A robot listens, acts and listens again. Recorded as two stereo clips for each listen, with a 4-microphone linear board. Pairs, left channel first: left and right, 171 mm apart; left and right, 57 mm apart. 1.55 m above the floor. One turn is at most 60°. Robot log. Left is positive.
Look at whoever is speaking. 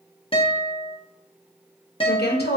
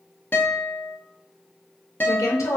note: The woman speaking: about 75° left or 105° left.
cmd yaw +60
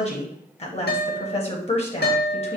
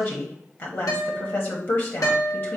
note: So it is at 40° left.
cmd yaw +40
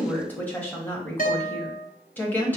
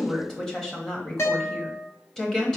note: The woman speaking is now 10° left.
cmd yaw +10
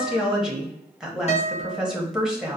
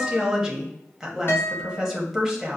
end: Facing the woman speaking, 1 to 2 m away.